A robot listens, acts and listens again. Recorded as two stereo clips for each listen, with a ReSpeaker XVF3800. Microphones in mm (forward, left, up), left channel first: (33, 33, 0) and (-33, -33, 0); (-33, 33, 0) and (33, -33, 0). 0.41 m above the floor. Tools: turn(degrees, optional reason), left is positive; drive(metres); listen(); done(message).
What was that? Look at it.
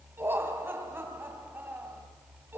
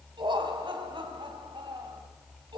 turn(degrees=-70, reason="The laughter: 70° right.")
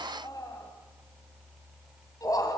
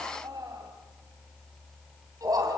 done("Found it: laughter, straight ahead, 2 to 4 m away.")